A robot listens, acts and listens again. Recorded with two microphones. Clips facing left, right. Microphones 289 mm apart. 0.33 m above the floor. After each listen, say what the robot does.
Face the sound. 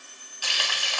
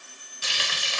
Turn 25° right.
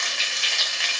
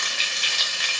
Turn 130° right.
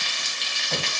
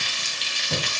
Turn 45° right.
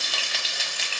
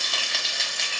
Found it: frying, straight ahead, 1 to 2 m away.